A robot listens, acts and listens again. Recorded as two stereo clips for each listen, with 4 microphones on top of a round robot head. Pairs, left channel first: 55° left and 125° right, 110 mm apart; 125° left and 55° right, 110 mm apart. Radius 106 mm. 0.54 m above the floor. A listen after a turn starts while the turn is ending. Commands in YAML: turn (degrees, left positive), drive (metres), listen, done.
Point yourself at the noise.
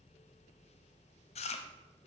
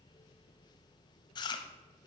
turn: 80
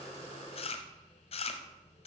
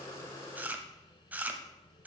turn: 25
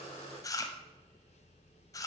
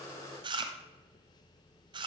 done: "Facing the chewing."